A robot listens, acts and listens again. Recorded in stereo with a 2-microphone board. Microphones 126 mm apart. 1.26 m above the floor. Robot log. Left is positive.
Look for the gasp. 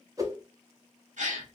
note: The gasp: about 70° right or 110° right.
cmd yaw -70
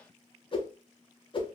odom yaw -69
cmd idle
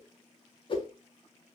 end: I heard a gasp, but can't make it out now. It was about 5° right or 40° right.